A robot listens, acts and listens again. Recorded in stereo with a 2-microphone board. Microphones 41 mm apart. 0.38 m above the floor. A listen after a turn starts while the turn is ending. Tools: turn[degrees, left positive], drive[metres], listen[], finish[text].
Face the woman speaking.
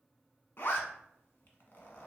Action: listen[]
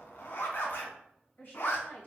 Thought: The woman speaking: about 55° left or 125° left.
Action: turn[55]
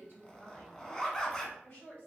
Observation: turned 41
Thought: So it is at 45° left.
Action: turn[45]
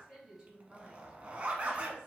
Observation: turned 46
Action: finish[Found it: a woman speaking, straight ahead.]